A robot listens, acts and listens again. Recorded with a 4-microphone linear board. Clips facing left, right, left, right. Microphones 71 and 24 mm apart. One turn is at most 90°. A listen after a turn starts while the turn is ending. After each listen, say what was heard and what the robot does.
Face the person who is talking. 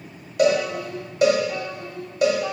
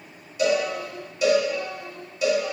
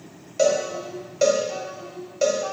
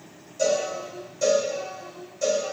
The child speaking: about 35° left or 145° left. Turn 35° left.
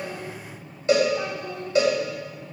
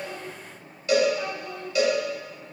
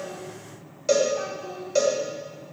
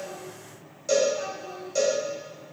The child speaking: about 30° left or 150° left. Turn 30° left.
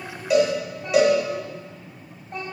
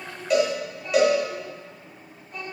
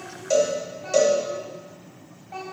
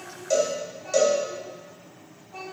The child speaking: about 45° left or 135° left. Turn 45° left.
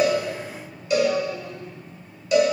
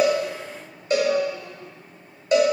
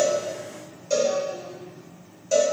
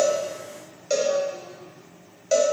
Keep listening.
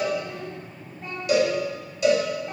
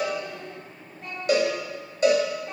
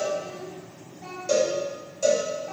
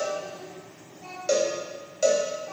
Facing the child speaking.